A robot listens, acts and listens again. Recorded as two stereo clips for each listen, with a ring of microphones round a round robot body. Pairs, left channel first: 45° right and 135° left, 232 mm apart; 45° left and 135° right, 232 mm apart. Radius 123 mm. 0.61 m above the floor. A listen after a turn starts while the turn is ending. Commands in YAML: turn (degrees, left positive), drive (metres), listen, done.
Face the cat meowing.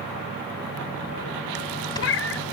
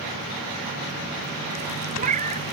turn: -75
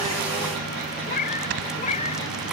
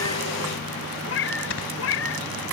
turn: 15
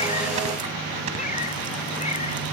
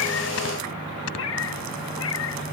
turn: 15
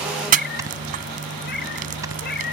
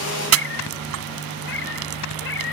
done: "Facing the cat meowing."